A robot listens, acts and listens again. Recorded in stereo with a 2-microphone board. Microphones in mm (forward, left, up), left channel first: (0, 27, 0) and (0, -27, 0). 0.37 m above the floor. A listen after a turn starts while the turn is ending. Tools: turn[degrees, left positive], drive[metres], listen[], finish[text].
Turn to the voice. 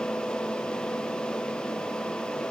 Action: listen[]
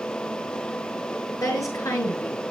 Action: turn[90]
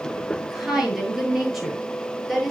Action: finish[Facing the woman speaking, over 4 m away.]